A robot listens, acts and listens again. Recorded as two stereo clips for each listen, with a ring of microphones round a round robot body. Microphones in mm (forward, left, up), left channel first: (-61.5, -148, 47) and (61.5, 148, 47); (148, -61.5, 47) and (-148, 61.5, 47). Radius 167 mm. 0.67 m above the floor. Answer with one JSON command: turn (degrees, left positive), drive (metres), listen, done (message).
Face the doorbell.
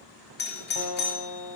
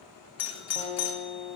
{"turn": -55}
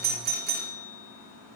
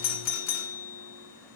{"turn": 10}
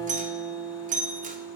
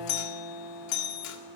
{"done": "Found it: a doorbell, straight ahead."}